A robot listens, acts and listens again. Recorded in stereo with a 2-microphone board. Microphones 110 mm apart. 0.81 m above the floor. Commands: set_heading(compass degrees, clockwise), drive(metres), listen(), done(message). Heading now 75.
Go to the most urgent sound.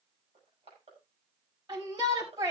set_heading(115)
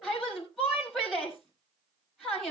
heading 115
drive(1.0)
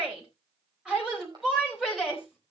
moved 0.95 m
drive(1.0)
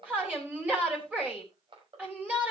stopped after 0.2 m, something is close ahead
set_heading(130)
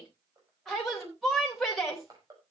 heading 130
done("Blocked. The shout is further on, straight ahead.")